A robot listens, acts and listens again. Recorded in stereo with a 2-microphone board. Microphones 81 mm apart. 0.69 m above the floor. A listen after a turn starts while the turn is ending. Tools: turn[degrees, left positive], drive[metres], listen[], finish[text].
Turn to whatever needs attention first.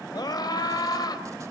Thought: The scream: about 55° left or 125° left.
Action: turn[55]
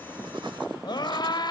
Thought: So it is at 65° left.
Action: turn[65]
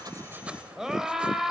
Action: finish[Facing the scream, 2 to 4 m away.]